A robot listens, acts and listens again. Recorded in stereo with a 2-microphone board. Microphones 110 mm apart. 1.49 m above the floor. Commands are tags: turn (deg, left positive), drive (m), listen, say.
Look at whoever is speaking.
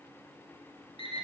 <listen/>
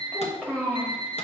<turn deg="30"/>
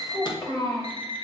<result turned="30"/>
<turn deg="140"/>
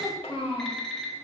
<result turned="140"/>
<turn deg="60"/>
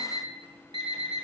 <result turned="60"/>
<listen/>
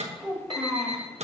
<say>Facing the child speaking.</say>